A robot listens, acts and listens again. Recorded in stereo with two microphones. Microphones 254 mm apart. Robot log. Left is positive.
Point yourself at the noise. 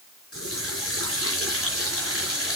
note: The running tap: about 60° left or 120° left.
cmd yaw +60
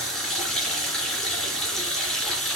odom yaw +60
end: Found it: a running tap, straight ahead.